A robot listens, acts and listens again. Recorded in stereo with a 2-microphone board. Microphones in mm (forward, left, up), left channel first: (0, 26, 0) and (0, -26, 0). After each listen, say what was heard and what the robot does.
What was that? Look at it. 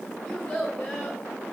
Turn 30° left.
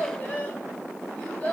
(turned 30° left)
The child speaking: about 25° left or 155° left. Turn 25° left.
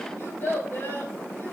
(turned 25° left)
So it is at 135° left. Turn 135° left.
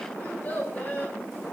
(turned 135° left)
The child speaking is now 25° left. Turn 25° left.
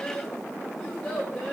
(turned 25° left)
The child speaking is now 10° left. Turn 10° left.
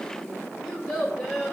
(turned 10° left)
Facing the child speaking, 2 to 4 m away.